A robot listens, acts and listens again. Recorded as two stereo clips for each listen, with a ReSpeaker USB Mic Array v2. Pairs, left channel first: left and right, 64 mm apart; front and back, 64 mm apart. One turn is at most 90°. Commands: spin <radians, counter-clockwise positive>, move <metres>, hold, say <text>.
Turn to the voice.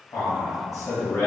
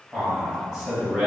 spin 1.48
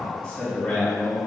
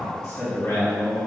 spin 0.26
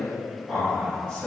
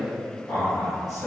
say Facing the man speaking, 1 to 2 m away.